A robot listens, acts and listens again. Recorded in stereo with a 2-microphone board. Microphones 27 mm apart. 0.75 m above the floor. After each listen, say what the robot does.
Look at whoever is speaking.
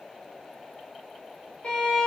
Keep listening.
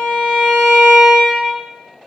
Keep listening.
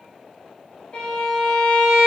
I can't make out anyone speaking to turn to.